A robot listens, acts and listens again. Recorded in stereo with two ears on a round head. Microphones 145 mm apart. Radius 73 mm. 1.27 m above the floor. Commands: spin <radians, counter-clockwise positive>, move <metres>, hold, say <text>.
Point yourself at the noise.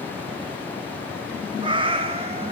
spin -0.61
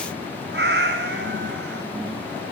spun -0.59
spin -1.92
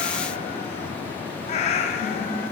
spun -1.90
spin 0.79
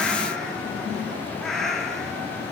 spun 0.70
say Found it: a cat meowing, straight ahead.